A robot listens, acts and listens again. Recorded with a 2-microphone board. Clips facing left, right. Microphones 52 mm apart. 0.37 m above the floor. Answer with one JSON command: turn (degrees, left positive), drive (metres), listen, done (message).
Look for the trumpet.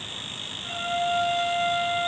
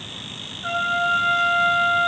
{"turn": -65}
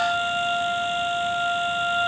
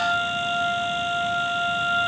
{"done": "Found it: a trumpet, straight ahead."}